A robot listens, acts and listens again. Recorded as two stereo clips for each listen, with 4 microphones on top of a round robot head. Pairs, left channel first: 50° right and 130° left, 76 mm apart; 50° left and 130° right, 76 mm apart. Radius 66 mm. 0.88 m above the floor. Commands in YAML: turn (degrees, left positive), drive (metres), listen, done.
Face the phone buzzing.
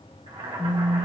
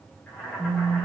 turn: 90
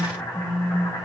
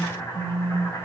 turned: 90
turn: -35
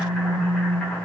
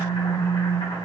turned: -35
done: "Facing the phone buzzing."